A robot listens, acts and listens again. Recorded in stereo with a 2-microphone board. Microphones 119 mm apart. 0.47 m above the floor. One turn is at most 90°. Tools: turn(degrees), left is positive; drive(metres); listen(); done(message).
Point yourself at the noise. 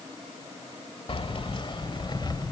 turn(degrees=35)
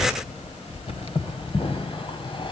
turn(degrees=45)
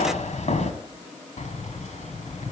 turn(degrees=80)
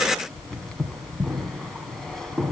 done("Found it: keys jangling, straight ahead.")